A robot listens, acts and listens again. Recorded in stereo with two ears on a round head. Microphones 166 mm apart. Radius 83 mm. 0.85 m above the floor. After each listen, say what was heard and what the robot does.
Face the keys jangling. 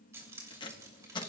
The keys jangling: about 20° right or 160° right. Turn 20° right.
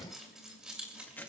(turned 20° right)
Turn 30° right.
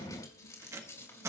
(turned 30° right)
So it is at 15° left. Turn 15° left.
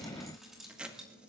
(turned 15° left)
Found it: keys jangling, straight ahead, 2 to 4 m away.